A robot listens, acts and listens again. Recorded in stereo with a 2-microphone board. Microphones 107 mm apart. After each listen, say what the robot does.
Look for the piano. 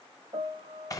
Turn 55° right.
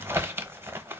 Keep listening.
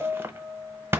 Facing the piano.